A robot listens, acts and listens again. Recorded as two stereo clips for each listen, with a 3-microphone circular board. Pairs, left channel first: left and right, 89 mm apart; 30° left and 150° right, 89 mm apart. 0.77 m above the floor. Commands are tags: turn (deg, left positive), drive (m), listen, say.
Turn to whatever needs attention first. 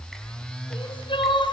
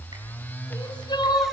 <turn deg="70"/>
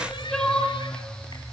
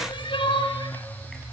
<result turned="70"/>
<say>Facing the crying.</say>